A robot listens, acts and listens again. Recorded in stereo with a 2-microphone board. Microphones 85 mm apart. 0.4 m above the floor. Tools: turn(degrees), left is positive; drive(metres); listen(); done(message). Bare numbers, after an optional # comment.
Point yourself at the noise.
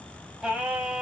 turn(-30)
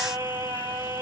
# So it is at 140° right.
turn(-140)
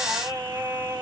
# The singing is now 50° right.
turn(-50)
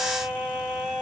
done("Found it: singing, straight ahead, under 1 m away.")